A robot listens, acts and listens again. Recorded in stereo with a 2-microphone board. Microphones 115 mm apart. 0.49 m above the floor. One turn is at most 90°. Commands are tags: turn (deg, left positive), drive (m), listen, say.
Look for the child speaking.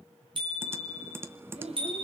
<turn deg="-65"/>
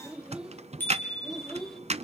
<say>Found it: a child speaking, straight ahead, 1 to 2 m away.</say>